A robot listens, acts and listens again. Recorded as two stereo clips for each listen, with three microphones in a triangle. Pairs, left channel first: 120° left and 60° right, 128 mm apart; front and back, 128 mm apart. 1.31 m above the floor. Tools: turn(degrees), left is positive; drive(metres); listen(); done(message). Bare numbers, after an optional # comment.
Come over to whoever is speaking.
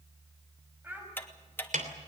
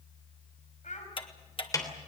# The child speaking: 15° left.
turn(15)
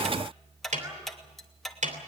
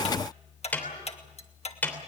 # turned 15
listen()
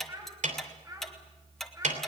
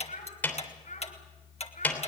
drive(1.0)
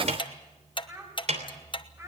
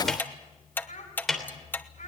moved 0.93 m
# The child speaking is now 10° left.
turn(10)
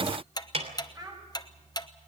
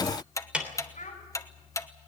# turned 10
drive(1.0)
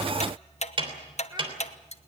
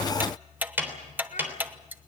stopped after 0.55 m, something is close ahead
listen()
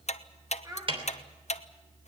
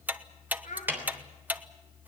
done("Blocked. The child speaking is further on, straight ahead.")